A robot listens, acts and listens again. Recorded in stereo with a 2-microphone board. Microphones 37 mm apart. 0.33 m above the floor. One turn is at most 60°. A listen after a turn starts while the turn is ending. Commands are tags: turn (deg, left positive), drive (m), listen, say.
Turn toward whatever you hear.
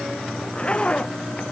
<turn deg="30"/>
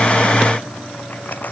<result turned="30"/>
<turn deg="60"/>
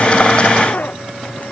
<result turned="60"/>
<turn deg="50"/>
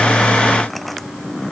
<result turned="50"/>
<say>Facing the zipper.</say>